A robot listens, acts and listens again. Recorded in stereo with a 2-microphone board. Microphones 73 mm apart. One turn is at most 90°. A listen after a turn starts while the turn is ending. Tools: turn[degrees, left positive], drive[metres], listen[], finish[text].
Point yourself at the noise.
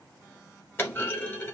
Thought: The clunk: about 30° left or 150° left.
Action: turn[30]
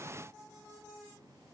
Action: listen[]
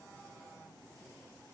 Action: finish[I heard a clunk, but can't make it out now. It was about straight ahead or 120° left.]